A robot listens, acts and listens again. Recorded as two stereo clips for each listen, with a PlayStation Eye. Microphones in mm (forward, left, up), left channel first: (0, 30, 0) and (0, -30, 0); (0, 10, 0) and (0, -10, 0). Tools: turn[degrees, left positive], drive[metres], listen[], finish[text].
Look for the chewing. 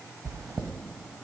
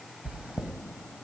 Action: turn[-90]
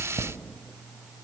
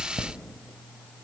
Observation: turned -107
Thought: So it is at 20° left.
Action: turn[20]
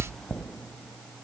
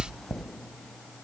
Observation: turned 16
Thought: The chewing is now 10° left.
Action: turn[10]
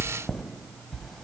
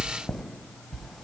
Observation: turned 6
Action: finish[Facing the chewing, 1 to 2 m away.]